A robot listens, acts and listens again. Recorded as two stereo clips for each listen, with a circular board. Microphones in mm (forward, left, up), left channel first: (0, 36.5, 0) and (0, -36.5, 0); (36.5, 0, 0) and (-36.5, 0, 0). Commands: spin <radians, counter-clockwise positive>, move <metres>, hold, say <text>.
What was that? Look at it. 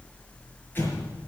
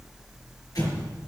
spin 0.52
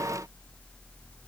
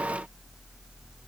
say I heard an explosion from this way, but can't make it out now.